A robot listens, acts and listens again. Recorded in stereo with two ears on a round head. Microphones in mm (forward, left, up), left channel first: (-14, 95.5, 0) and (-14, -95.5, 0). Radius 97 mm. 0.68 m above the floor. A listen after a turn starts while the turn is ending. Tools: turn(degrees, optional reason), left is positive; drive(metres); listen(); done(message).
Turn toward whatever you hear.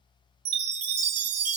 turn(degrees=-90)
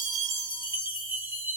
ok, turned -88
turn(degrees=-10, reason="So it is at 10° right.")
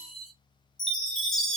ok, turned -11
done("Found it: a chime, straight ahead.")